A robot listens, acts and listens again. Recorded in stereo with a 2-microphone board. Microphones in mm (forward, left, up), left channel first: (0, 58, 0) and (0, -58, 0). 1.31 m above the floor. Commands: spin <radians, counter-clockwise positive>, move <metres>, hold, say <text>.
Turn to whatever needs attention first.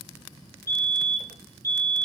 spin -0.44
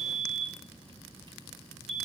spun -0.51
say Facing the fire alarm.